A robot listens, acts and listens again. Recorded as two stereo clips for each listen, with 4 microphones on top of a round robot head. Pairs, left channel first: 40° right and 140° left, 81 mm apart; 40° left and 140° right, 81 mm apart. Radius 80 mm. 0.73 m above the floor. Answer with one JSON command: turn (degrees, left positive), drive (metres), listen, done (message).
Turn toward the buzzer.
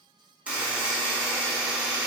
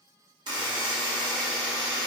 {"turn": -150}
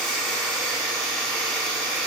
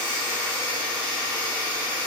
{"turn": 45}
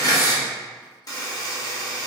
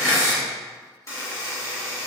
{"done": "Found it: a buzzer, straight ahead, 1 to 2 m away."}